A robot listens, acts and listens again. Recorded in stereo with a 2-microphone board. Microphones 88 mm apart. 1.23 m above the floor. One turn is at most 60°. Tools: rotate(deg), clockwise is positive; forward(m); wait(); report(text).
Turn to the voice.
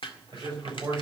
rotate(45)
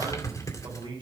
rotate(60)
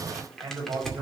rotate(55)
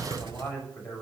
rotate(-15)
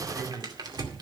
report("Facing the man speaking, over 4 m away.")